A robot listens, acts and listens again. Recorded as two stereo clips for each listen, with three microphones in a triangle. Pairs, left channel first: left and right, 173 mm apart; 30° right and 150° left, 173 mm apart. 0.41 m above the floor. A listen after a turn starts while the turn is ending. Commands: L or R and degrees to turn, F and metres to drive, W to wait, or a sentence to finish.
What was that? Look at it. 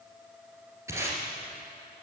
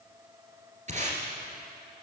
R165
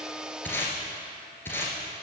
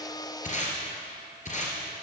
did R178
L15
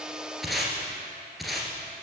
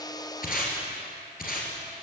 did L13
Facing the tape being pulled.